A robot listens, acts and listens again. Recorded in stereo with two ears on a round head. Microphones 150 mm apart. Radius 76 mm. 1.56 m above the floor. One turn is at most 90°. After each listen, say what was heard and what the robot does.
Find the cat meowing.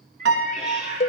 The cat meowing: about 45° right or 135° right. Turn 45° right.
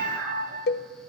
Keep listening.
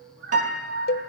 So it is at 100° right. Turn 90° right.
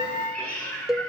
The cat meowing is now 10° left. Turn 10° left.
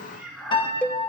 Found it: a cat meowing, straight ahead, over 4 m away.